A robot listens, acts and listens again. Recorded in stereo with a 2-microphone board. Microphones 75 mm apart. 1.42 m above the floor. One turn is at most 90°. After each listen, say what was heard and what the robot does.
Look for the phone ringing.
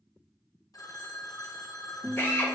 The phone ringing: about 55° left or 125° left. Turn 55° left.
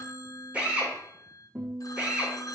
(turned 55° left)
So it is at 60° left. Turn 60° left.
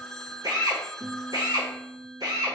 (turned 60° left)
Found it: a phone ringing, straight ahead, under 1 m away.